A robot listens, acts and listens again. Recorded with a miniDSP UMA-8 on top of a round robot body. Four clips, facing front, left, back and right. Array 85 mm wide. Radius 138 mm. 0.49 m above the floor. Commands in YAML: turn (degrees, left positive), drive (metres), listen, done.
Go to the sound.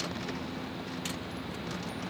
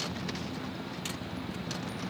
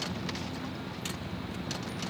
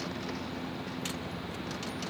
listen: true
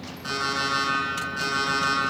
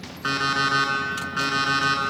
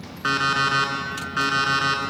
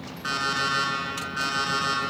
turn: 155
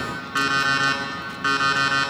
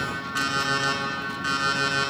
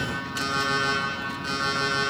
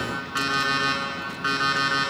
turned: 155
turn: -15
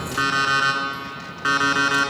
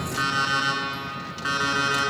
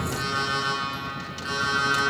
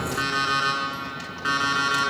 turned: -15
drive: 1.0
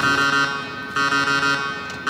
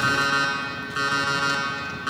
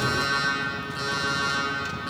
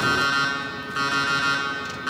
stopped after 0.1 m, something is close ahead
done: "Something is in my way. I am facing the alarm clock but have not reached it."